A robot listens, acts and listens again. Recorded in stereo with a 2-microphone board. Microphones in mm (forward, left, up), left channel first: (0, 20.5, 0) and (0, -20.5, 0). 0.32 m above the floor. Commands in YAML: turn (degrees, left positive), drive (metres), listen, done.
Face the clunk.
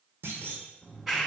turn: -90
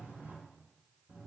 done: "I heard a clunk from this way, but can't make it out now."